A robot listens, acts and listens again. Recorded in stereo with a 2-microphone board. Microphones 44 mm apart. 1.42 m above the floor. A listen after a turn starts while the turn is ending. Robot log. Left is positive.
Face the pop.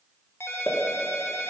note: The pop: about 40° left or 140° left.
cmd yaw +40
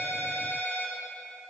cmd idle
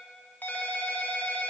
end: I heard a pop, but can't make it out now. It was about straight ahead or 100° left.